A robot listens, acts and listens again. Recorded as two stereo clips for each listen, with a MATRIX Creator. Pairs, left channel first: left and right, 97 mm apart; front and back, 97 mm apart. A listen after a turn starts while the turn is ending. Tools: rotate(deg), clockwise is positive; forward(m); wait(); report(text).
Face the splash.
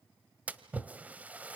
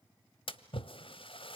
rotate(15)
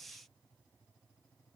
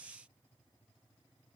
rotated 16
report("I heard a splash from this way, but can't make it out now.")